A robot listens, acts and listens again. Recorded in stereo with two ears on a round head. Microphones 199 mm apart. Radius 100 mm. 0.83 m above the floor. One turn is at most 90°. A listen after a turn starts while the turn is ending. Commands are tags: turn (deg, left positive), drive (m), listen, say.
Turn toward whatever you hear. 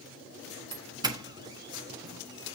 <turn deg="-20"/>
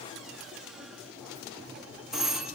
<say>Found it: a doorbell, straight ahead, 1 to 2 m away.</say>